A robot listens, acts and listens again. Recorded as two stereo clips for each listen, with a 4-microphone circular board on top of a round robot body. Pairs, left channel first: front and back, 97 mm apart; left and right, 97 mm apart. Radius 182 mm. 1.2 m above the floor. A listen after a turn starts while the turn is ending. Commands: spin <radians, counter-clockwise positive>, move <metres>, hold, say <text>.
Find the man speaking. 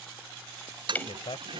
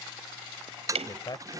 spin 0.70
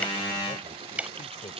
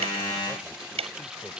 hold
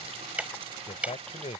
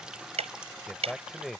say Facing the man speaking.